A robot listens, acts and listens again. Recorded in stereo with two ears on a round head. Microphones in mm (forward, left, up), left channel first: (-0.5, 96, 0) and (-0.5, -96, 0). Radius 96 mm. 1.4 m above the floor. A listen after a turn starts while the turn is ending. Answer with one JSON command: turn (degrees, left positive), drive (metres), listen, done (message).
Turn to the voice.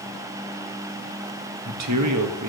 {"turn": -90}
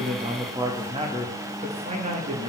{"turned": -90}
{"turn": -35}
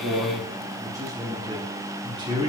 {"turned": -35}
{"turn": -20}
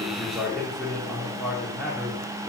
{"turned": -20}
{"done": "Facing the man speaking, 2 to 4 m away."}